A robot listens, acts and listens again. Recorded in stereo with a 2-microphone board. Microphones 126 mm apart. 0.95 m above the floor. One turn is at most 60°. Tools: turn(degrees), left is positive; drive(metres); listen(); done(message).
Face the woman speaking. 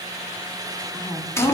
turn(degrees=30)
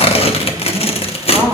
done("Found it: a woman speaking, straight ahead, 1 to 2 m away.")